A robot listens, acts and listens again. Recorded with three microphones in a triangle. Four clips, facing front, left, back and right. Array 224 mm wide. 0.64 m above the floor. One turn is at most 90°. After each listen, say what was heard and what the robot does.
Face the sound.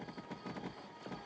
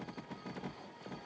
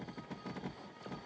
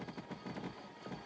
Keep listening.
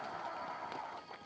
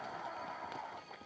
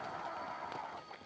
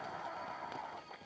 Keep listening.
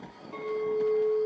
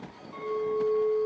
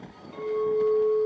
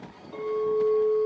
The clink: 65° right. Turn 65° right.
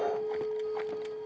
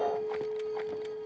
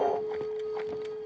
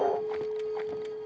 The clink is now 10° left. Turn 10° left.
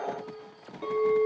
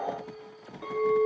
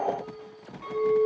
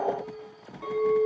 Found it: a clink, straight ahead, 2 to 4 m away.